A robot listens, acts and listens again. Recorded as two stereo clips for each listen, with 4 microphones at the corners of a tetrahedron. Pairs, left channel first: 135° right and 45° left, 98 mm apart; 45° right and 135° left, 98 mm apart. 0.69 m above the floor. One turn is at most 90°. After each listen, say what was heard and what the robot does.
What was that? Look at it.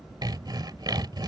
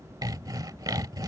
The sawing: 90° left. Turn 90° left.
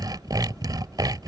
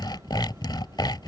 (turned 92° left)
Found it: sawing, straight ahead.